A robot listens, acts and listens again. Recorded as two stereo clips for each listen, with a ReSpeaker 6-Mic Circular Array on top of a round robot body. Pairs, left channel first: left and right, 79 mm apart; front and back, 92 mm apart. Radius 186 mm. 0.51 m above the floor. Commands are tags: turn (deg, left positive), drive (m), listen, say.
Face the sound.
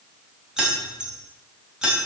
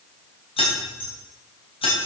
<turn deg="-10"/>
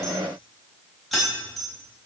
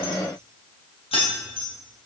<say>Found it: keys jangling, straight ahead, 2 to 4 m away.</say>